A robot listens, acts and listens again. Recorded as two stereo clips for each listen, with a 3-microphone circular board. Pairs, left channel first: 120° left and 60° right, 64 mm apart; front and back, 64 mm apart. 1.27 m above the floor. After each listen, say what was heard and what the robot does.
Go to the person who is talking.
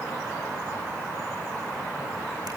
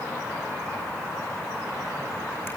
Keep listening.
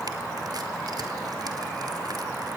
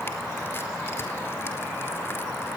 Keep listening.
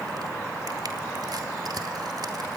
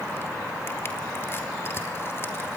I can't make out anyone speaking to turn to.